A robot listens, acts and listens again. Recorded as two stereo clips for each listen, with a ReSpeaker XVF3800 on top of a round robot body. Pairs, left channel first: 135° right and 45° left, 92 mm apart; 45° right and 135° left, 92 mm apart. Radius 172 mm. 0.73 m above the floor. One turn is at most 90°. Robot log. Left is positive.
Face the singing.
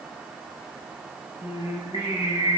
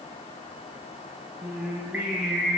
note: The singing: 150° right.
cmd yaw -90
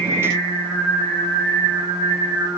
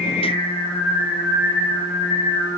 note: The singing is now 75° right.
cmd yaw -75
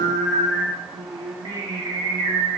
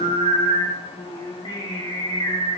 end: Found it: singing, straight ahead.